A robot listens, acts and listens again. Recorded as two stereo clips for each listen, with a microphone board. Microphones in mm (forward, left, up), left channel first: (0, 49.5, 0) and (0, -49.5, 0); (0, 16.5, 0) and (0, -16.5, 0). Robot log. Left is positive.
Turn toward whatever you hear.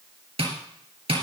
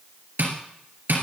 cmd yaw -90
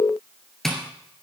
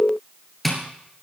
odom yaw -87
end: Facing the tapping.